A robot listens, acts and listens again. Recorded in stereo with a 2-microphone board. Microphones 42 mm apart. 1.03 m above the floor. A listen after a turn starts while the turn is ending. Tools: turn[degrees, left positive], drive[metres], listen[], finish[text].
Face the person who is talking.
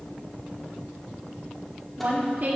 Thought: The woman speaking: about 45° right or 135° right.
Action: turn[-45]
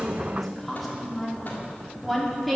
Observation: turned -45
Action: finish[Facing the woman speaking, 2 to 4 m away.]